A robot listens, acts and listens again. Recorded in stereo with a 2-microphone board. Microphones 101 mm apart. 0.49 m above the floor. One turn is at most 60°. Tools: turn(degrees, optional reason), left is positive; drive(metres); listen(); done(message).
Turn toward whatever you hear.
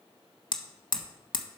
turn(degrees=50, reason="The hammering: about 50° left or 130° left.")
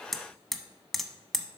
done("Facing the hammering.")